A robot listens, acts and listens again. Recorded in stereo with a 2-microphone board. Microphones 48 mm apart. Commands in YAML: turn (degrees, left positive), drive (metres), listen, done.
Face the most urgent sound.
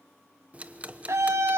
turn: -70
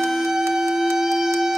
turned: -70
turn: -10
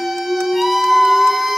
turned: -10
done: "Facing the scream."